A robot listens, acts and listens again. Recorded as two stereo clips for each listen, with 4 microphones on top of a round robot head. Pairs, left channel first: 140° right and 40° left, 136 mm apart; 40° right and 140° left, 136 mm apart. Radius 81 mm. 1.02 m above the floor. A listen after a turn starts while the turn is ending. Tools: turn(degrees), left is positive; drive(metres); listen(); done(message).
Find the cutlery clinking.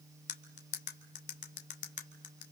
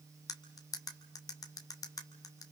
turn(degrees=-105)
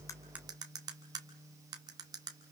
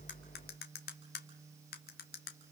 turn(degrees=-25)
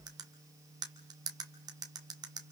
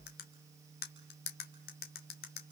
turn(degrees=-25)
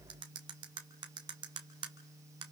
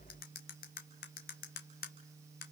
turn(degrees=-20)
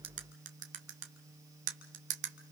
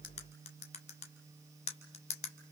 done("Found it: cutlery clinking, straight ahead, 1 to 2 m away.")